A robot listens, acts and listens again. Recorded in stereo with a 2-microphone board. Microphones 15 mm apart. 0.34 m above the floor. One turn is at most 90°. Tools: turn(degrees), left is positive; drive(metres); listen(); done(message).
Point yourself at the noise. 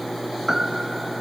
turn(degrees=-25)
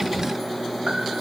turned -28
listen()
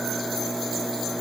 listen()
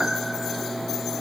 turn(degrees=-90)
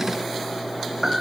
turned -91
turn(degrees=-35)
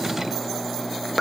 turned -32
done("Found it: a piano, straight ahead.")